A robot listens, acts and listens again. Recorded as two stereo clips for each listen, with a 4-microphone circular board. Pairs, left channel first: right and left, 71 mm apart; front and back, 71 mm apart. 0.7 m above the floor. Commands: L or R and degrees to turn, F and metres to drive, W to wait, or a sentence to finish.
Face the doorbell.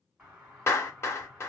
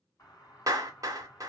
L15
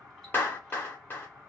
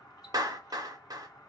Facing the doorbell.